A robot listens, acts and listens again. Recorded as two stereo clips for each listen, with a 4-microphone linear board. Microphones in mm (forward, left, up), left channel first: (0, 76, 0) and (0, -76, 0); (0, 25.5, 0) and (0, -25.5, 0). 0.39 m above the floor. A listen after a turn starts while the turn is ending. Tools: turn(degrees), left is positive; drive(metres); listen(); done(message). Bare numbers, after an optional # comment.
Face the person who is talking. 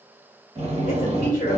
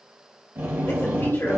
# The woman speaking: about 60° left or 120° left.
turn(60)
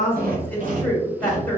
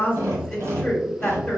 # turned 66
# So it is at 15° left.
turn(15)
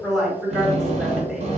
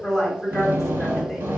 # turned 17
done("Facing the woman speaking.")